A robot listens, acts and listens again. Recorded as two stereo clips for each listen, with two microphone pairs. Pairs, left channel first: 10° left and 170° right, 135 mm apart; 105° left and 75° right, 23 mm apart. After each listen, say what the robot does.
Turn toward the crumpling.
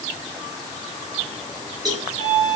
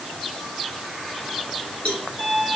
Keep listening.
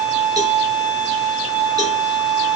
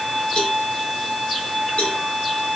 Keep listening.
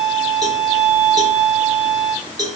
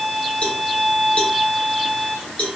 I can't make out crumpling to turn to.